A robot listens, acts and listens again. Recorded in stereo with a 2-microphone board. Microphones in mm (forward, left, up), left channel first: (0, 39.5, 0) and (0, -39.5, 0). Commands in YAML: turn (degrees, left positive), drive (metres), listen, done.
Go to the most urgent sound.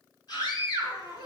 turn: 60
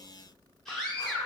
drive: 1.0
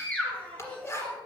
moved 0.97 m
turn: 20
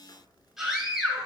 drive: 1.0
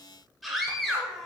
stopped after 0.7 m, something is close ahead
done: "Arrived at the scream, straight ahead."